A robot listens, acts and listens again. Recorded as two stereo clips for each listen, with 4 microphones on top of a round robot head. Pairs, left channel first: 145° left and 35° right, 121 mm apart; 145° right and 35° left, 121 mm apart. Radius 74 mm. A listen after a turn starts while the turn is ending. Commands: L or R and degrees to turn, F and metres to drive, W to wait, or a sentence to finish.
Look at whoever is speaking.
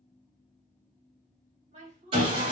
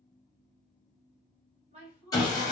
Facing the woman speaking, under 1 m away.